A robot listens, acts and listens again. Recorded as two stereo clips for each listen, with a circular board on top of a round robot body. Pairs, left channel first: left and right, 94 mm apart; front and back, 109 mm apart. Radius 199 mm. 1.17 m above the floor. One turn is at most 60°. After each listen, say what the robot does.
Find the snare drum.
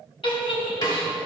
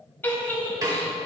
Turn 60° left.
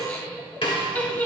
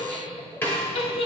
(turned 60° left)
Turn 60° left.
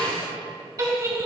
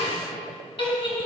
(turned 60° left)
Turn 15° left.
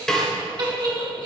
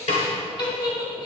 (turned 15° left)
Found it: a snare drum, straight ahead.